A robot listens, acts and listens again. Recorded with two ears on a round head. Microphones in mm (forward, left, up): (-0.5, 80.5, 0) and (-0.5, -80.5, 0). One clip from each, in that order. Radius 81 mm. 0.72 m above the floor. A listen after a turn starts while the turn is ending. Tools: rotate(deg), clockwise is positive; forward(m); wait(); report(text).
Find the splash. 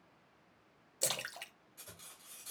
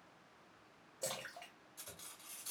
rotate(-90)
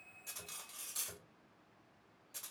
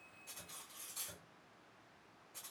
report("I heard a splash from this way, but can't make it out now.")